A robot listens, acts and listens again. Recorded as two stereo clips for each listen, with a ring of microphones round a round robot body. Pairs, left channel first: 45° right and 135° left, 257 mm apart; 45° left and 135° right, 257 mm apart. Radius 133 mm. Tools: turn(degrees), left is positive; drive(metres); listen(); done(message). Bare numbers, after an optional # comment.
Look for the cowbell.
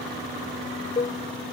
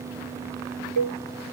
# The cowbell: 115° right.
turn(-115)
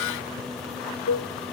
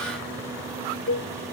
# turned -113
done("Found it: a cowbell, straight ahead.")